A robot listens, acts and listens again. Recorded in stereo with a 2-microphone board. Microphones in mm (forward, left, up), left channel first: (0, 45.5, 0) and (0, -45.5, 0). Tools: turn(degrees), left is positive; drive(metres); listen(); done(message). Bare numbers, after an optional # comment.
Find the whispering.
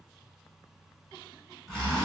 listen()
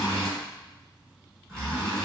listen()
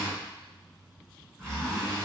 done("I can't make out whispering to turn to.")